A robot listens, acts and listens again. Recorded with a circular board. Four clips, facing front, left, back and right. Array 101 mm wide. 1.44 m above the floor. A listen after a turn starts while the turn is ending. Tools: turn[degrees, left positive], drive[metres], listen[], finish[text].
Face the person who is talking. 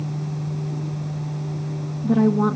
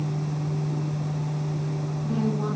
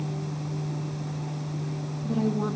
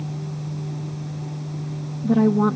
Thought: The woman speaking: 55° right.
Action: turn[-55]
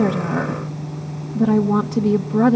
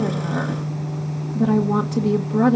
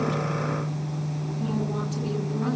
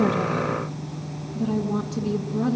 Thought: The woman speaking is now 30° left.
Action: turn[30]
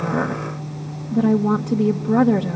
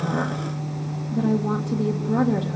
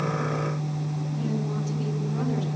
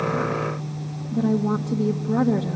Action: finish[Facing the woman speaking.]